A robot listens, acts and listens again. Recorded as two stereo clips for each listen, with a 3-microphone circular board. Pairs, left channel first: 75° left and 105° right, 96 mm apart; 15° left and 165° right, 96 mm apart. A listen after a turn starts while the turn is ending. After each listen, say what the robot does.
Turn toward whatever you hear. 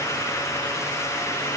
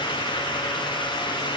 Keep listening.
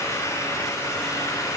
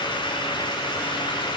Keep listening.
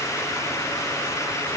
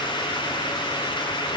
I can't make out anything.